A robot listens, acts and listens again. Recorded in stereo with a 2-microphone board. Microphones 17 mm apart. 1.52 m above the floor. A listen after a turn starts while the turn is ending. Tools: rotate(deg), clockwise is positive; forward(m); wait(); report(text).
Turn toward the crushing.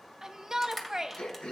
rotate(-30)
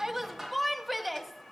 rotate(15)
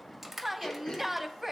report("Facing the crushing, 2 to 4 m away.")